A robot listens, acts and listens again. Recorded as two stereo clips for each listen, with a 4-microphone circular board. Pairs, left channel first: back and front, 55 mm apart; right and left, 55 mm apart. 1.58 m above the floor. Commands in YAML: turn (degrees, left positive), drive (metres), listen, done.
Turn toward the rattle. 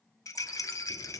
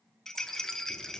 turn: -170
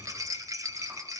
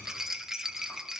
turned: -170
turn: 10
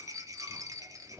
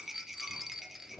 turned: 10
done: "Found it: a rattle, straight ahead, under 1 m away."